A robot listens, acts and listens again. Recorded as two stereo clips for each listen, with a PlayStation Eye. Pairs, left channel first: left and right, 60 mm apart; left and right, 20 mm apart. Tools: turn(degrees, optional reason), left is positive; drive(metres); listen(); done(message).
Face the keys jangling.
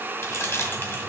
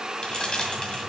turn(degrees=40, reason="The keys jangling: about 40° left or 140° left.")
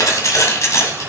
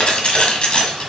turn(degrees=50, reason="The keys jangling: about 50° left or 130° left.")
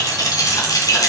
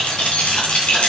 turn(degrees=70, reason="So it is at 70° left.")
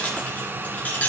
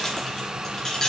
turn(degrees=20, reason="The keys jangling is now 20° left.")
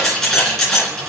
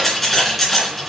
done("Found it: keys jangling, straight ahead.")